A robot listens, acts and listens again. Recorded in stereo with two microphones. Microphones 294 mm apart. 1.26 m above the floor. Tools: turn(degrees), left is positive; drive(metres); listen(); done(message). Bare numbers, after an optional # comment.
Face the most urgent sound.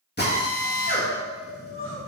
# The crying: about 45° left or 135° left.
turn(45)
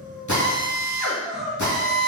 done("Found it: crying, straight ahead.")